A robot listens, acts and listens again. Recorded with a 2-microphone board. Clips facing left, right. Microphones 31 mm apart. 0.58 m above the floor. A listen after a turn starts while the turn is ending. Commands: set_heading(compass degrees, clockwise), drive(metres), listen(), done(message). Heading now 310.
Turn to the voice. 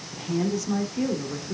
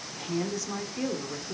set_heading(280)
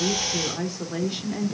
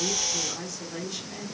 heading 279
set_heading(134)
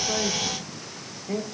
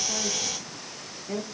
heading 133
done("Facing the woman speaking, 1 to 2 m away.")